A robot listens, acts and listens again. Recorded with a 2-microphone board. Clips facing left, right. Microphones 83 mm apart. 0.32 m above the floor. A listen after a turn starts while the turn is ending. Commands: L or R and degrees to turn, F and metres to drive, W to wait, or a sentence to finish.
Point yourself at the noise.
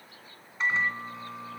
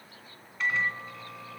L25
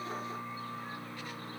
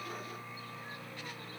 L130
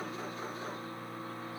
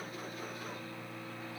L50
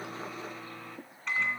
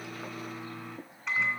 Found it: a microwave, straight ahead.